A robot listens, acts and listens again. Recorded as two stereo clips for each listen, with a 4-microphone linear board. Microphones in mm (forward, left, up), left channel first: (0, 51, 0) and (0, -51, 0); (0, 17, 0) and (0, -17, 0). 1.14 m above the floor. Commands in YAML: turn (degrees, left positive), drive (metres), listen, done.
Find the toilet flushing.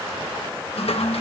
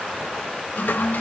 turn: 75
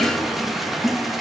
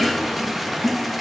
done: "Found it: a toilet flushing, straight ahead."